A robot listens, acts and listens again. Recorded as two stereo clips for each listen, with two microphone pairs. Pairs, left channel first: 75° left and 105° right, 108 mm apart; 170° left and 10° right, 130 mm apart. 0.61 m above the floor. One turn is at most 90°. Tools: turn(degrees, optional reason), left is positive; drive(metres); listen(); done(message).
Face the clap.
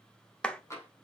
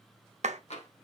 done("Found it: a clap, straight ahead, 1 to 2 m away.")